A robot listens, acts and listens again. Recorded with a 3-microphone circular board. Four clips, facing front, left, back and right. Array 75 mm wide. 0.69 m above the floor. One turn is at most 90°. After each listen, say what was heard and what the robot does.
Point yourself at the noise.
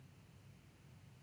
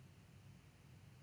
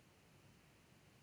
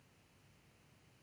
Keep listening.
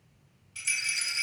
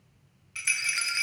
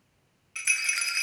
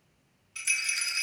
The rattle: 150° left. Turn 90° left.
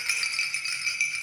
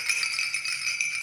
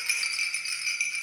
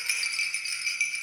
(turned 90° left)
The rattle is now 60° left. Turn 60° left.
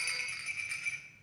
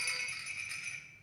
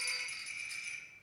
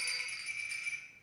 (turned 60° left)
The rattle is now 35° left. Turn 35° left.
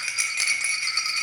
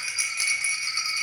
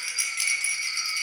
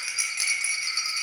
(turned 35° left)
Facing the rattle.